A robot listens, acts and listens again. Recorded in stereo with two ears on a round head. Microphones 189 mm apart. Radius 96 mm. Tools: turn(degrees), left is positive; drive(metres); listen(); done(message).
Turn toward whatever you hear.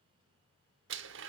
turn(degrees=-60)
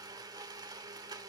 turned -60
turn(degrees=-20)
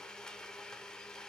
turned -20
done("Facing the blender, under 1 m away.")